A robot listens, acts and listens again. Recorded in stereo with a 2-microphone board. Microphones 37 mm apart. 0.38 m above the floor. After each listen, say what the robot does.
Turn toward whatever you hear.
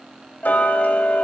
Turn 50° left.
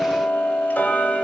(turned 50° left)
Turn 70° left.
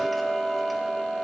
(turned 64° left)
Found it: ticking, straight ahead.